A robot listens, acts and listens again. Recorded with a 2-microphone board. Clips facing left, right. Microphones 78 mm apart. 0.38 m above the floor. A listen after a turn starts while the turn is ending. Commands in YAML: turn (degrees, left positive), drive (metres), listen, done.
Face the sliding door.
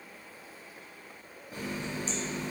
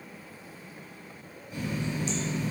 listen: true
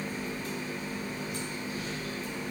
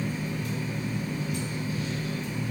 listen: true
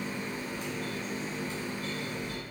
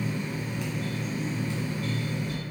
done: "I can't make out a sliding door to turn to."